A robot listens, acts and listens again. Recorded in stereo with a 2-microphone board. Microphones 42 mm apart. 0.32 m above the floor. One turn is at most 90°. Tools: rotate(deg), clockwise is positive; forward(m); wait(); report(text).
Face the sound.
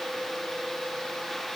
wait()
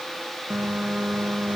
rotate(30)
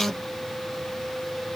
report("Facing the phone buzzing.")